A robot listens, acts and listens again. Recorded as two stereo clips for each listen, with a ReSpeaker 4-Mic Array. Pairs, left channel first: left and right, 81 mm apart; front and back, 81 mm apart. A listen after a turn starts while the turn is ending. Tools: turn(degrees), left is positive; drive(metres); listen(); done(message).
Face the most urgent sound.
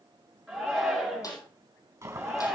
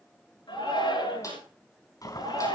done("Found it: a shout, straight ahead.")